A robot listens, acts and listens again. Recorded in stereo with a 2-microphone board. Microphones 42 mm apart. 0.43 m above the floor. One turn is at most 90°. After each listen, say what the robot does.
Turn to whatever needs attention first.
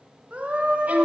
Turn 40° right.
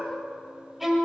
Keep listening.
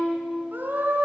Turn 90° right.
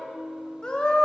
Turn 25° left.
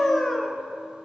Turn 10° left.
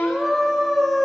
Facing the scream.